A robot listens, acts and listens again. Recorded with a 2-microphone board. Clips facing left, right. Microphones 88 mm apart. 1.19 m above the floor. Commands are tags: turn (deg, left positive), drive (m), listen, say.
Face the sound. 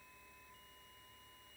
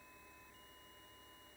<listen/>
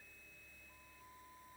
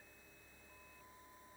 <listen/>
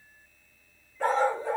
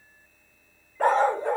<turn deg="-65"/>
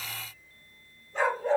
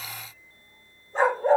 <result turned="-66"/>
<turn deg="-40"/>
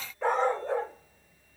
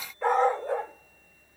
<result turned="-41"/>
<say>Found it: a dog barking, straight ahead, 2 to 4 m away.</say>